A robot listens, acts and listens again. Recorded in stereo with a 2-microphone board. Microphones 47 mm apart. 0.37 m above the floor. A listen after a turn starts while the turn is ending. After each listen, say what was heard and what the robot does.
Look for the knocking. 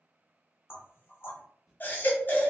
The knocking: about 55° left or 125° left. Turn 55° left.
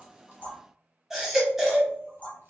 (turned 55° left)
So it is at 35° left. Turn 35° left.
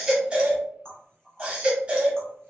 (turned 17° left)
The knocking is now 20° left. Turn 20° left.
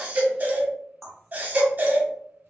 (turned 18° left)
Facing the knocking.